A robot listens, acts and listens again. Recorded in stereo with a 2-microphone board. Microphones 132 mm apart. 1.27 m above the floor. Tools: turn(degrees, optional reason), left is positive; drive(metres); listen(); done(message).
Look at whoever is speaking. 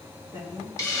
turn(degrees=-20, reason="The woman speaking: about 20° right or 160° right.")
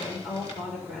done("Facing the woman speaking, over 4 m away.")